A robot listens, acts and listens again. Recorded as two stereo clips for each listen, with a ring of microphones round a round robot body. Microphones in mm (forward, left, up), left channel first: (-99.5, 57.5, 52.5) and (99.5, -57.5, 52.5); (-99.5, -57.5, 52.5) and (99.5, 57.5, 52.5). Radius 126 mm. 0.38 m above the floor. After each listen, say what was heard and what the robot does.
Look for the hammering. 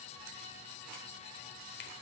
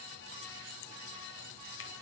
Keep listening.
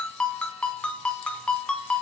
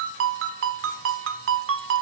Keep listening.
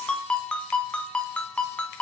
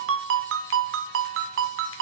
I can't make out hammering, only a ringtone.